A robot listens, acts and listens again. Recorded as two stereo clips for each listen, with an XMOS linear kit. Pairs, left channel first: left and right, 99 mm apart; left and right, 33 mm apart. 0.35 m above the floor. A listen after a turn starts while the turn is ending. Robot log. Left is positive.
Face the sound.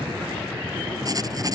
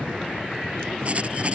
note: The writing: about 35° right or 145° right.
cmd yaw -35
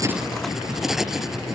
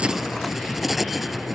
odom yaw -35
end: Found it: writing, straight ahead.